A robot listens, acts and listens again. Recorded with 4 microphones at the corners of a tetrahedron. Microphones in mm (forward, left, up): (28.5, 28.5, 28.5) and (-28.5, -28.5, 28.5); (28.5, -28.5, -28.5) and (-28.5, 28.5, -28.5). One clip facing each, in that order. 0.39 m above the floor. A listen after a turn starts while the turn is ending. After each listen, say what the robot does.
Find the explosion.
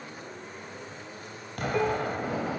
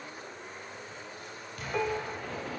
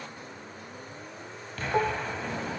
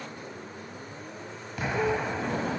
Turn 60° left.
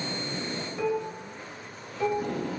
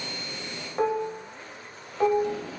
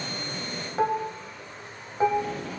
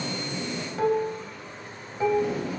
I heard an explosion from this way, but can't make it out now.